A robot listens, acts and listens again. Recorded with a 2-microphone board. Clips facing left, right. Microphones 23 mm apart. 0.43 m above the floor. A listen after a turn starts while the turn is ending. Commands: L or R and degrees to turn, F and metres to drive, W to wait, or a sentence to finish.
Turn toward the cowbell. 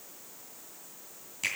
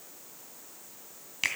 W
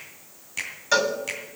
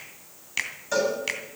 L65
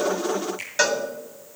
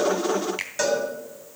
L40
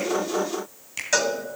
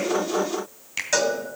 Found it: a cowbell, straight ahead, 2 to 4 m away.